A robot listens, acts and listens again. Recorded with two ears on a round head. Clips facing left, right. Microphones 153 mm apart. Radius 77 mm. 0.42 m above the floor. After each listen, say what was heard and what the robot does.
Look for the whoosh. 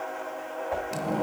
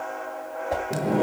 The whoosh: about 50° right or 130° right. Turn 50° right.
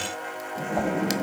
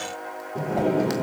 Keep listening.
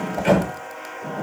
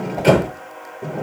Keep listening.
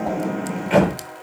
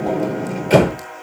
I heard a whoosh, but can't make it out now. It was about straight ahead or 80° right.